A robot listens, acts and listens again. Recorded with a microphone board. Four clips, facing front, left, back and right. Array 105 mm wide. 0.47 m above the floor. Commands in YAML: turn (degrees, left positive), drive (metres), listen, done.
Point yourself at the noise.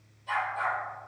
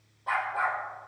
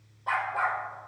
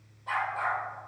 turn: 155
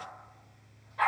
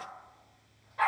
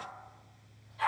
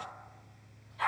turn: 45
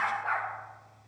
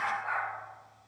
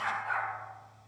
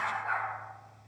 done: "Facing the dog barking."